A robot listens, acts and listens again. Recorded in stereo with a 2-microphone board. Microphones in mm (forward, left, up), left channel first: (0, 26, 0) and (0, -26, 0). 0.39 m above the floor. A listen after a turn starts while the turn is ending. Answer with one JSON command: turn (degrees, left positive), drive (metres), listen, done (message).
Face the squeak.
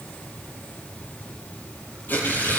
{"listen": true}
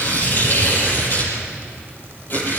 {"listen": true}
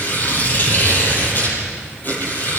{"done": "I can't make out a squeak, only tearing paper."}